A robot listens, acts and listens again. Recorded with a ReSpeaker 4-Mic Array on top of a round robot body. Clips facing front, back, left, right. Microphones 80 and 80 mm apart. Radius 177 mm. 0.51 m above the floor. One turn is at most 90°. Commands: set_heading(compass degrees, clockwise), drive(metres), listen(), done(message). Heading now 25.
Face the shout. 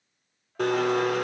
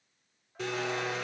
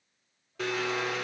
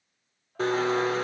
listen()
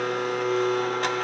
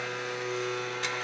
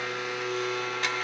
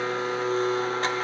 listen()
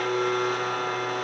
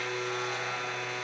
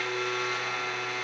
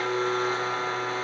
done("I can't make out a shout, only a blender.")